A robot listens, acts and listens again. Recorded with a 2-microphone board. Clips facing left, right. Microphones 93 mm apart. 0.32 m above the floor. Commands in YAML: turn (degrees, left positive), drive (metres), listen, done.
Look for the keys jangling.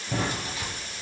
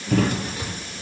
turn: -45
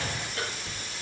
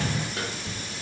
turn: -105
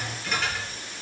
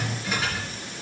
turn: -10
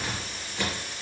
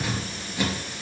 turn: -10
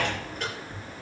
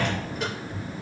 done: "Found it: keys jangling, straight ahead, over 4 m away."